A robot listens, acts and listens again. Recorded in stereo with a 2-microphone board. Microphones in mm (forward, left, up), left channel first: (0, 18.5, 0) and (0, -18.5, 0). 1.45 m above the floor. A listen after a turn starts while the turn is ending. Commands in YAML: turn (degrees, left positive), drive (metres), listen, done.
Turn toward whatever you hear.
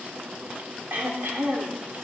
turn: -60
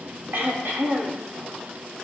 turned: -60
turn: -60
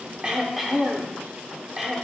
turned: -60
turn: -10
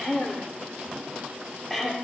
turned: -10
done: "Found it: throat clearing, straight ahead."